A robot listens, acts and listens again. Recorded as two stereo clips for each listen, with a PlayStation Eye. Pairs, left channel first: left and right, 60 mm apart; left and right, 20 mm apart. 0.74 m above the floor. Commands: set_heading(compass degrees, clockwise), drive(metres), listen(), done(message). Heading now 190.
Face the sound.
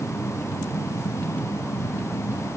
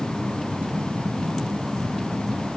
listen()
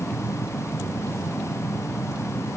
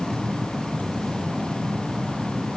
listen()
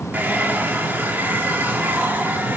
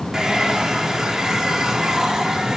set_heading(220)
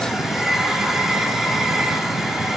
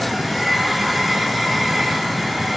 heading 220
done("Found it: a hair dryer, straight ahead.")